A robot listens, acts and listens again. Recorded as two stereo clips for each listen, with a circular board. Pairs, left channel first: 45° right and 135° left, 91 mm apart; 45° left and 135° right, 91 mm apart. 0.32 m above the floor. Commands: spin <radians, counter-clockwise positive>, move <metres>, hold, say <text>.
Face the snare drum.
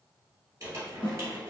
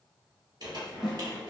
spin -0.96
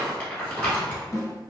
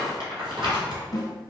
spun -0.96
say Facing the snare drum.